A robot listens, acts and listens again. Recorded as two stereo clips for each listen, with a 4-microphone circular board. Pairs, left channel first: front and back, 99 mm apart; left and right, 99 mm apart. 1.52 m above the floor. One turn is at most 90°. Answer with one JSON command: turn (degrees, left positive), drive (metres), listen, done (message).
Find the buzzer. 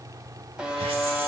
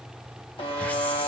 {"turn": 90}
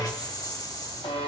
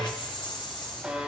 {"turn": -10}
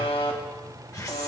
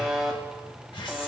{"done": "Found it: a buzzer, straight ahead, 1 to 2 m away."}